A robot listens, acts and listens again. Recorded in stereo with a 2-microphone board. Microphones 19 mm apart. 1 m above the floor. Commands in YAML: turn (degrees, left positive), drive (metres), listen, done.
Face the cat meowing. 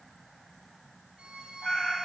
turn: 50
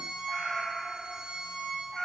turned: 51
turn: 15
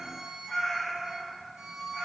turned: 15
done: "Found it: a cat meowing, straight ahead."